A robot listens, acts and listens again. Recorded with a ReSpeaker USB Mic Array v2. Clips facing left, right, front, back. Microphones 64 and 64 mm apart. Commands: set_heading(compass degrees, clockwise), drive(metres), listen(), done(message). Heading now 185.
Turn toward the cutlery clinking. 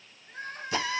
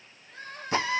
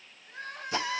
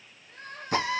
listen()
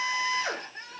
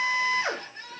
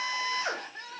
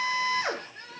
listen()
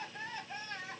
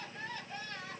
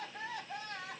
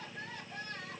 done("I can't make out cutlery clinking to turn to.")